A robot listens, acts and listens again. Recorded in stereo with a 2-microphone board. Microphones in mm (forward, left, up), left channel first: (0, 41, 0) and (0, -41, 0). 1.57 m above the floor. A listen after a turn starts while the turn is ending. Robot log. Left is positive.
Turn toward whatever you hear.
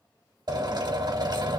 note: The drill: about 60° right or 120° right.
cmd yaw -60
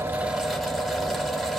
end: Facing the drill, 2 to 4 m away.